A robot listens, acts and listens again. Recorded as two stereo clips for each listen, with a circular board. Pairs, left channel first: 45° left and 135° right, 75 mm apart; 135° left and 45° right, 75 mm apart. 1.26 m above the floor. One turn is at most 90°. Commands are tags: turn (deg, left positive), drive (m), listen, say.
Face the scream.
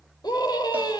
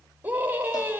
<turn deg="25"/>
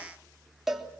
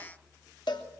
<listen/>
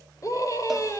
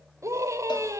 <say>Found it: a scream, straight ahead, over 4 m away.</say>